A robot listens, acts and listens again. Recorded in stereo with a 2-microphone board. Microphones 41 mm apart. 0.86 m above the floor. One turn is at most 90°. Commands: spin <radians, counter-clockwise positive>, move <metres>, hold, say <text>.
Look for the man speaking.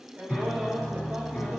spin -0.61
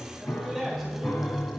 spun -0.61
say Facing the man speaking, over 4 m away.